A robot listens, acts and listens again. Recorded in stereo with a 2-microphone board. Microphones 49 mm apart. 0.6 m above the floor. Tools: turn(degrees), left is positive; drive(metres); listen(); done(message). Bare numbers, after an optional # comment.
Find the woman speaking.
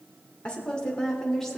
turn(30)
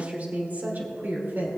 # So it is at 50° right.
turn(-50)
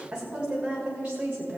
# The woman speaking is now 30° right.
turn(-30)
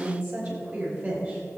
# The woman speaking is now 25° right.
turn(-25)
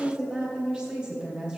done("Found it: a woman speaking, straight ahead.")